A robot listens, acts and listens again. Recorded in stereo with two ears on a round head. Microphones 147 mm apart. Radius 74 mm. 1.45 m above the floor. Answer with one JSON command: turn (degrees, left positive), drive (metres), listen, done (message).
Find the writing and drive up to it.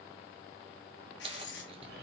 {"turn": 70}
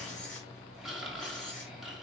{"listen": true}
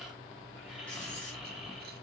{"listen": true}
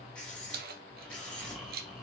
{"drive": 1.0}
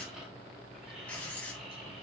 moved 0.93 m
{"turn": 10}
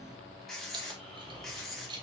{"drive": 1.0}
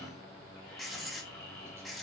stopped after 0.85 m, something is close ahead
{"done": "I am next to the writing."}